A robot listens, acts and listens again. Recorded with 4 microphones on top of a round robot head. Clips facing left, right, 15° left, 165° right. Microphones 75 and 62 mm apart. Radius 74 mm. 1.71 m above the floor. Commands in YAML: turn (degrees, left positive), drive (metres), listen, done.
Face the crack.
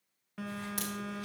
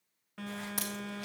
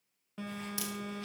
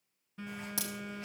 turn: -170
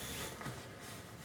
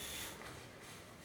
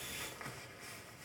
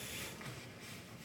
done: "I heard a crack from this way, but can't make it out now."